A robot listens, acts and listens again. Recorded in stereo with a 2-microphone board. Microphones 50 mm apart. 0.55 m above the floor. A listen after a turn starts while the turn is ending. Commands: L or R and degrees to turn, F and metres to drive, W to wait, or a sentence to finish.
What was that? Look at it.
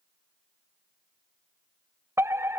R65
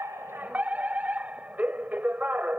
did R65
R35
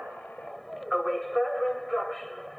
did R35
Facing the fire alarm.